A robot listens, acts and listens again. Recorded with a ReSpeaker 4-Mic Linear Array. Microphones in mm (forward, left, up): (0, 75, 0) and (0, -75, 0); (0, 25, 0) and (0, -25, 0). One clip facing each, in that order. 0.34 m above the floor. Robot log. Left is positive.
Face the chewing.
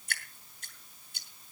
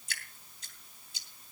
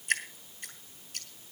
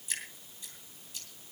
cmd idle
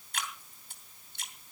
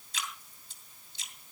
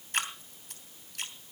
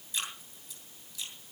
cmd idle
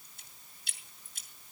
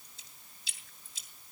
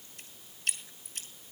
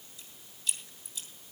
end: I can't make out chewing, only dripping.